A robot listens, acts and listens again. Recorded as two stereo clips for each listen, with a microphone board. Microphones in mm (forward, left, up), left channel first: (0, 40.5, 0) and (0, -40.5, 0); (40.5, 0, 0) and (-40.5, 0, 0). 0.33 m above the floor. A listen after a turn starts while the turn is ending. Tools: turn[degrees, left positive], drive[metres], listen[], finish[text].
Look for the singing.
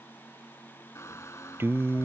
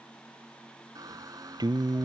Thought: The singing: 150° right.
Action: turn[-150]
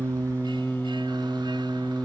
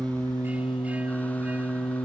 Action: finish[Found it: singing, straight ahead.]